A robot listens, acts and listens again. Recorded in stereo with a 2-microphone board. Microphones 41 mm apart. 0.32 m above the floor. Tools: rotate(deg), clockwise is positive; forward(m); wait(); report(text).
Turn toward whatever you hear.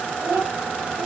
rotate(50)
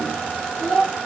rotate(-10)
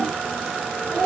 rotate(-10)
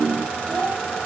report("Facing the child speaking.")